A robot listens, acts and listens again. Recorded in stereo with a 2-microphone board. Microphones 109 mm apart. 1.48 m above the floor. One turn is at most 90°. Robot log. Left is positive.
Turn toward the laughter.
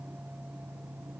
cmd idle
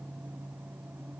cmd idle
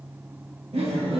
note: The laughter: about 60° right or 120° right.
cmd yaw -60
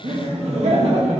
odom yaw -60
note: So it is at 80° right.
cmd yaw -80
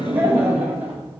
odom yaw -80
note: The laughter is now 20° right.
cmd yaw -20
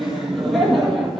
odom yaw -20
end: Found it: laughter, straight ahead, 2 to 4 m away.